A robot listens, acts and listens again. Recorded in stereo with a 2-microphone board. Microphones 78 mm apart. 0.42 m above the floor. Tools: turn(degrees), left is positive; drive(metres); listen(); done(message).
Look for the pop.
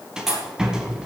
turn(degrees=-30)
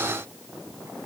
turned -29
listen()
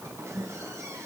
done("I heard a pop, but can't make it out now. It was about 25° left or 145° right.")